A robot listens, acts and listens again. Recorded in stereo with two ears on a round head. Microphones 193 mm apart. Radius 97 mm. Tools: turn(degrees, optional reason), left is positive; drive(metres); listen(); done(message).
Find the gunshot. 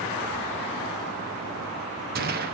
turn(degrees=-45, reason="The gunshot: about 45° right or 135° right.")
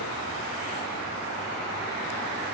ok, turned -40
listen()
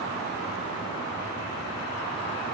done("I heard a gunshot, but can't make it out now. It was about 5° right or 95° right.")